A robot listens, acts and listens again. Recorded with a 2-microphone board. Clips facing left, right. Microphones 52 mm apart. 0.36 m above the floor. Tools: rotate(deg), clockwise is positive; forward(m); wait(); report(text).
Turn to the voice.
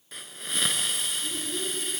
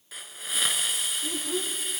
rotate(60)
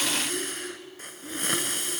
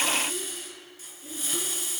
rotate(10)
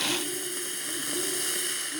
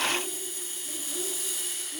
report("Found it: a child speaking, straight ahead.")